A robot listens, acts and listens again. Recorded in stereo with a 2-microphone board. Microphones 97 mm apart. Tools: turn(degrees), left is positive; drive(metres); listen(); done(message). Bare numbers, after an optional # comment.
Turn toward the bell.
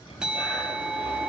turn(-30)
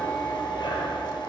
listen()
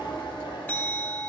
# So it is at 20° left.
turn(20)
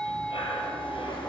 # The bell is now 10° left.
turn(10)
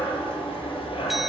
listen()
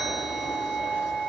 done("Facing the bell, under 1 m away.")